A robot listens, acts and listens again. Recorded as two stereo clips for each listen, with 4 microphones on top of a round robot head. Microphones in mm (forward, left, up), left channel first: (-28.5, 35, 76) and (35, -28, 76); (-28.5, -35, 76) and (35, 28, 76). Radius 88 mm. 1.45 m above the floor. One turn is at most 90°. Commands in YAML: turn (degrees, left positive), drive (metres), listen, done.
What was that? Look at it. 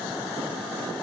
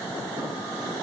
listen: true
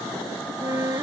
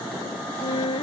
turn: -90
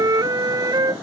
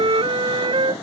turn: 10
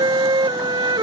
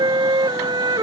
done: "Facing the flute."